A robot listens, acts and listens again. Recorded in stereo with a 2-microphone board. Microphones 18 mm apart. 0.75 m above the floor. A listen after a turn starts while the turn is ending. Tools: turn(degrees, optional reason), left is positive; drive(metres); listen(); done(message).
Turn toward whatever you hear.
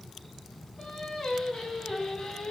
turn(degrees=60, reason="The singing: about 60° left or 120° left.")
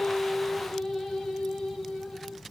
turn(degrees=75, reason="So it is at 75° left.")
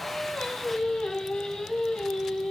turn(degrees=65, reason="The singing is now 65° left.")
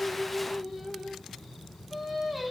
turn(degrees=-10, reason="The singing is now 10° right.")
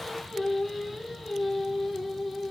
done("Found it: singing, straight ahead.")